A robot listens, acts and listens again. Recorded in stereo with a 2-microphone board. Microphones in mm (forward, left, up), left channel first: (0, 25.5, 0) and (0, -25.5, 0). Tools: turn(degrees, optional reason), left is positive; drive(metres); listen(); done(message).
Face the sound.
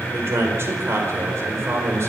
turn(degrees=-65, reason="The man speaking: about 65° right or 115° right.")
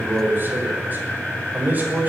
turn(degrees=-35, reason="So it is at 35° right.")
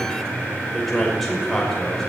turn(degrees=10, reason="The man speaking is now 10° left.")
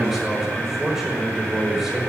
done("Found it: a man speaking, straight ahead.")